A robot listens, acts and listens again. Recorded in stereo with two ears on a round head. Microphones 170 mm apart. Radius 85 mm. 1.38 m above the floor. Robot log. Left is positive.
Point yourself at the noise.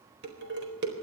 note: The dishes clattering: about 60° right or 120° right.
cmd yaw -60
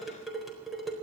end: Facing the dishes clattering.